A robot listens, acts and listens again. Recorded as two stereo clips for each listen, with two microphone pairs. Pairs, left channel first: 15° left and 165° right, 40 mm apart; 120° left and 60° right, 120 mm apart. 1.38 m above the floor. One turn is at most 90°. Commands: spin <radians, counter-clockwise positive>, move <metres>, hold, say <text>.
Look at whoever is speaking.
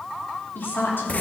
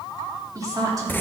say Found it: a woman speaking, straight ahead, 2 to 4 m away.